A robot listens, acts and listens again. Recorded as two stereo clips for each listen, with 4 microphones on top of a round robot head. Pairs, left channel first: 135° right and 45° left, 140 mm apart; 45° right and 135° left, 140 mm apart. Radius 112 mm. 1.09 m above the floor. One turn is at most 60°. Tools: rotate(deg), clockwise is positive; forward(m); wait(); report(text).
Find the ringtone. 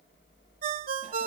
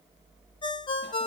rotate(-15)
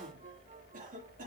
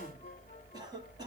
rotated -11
wait()
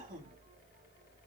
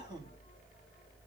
wait()
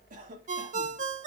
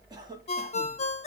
report("Found it: a ringtone, straight ahead, under 1 m away.")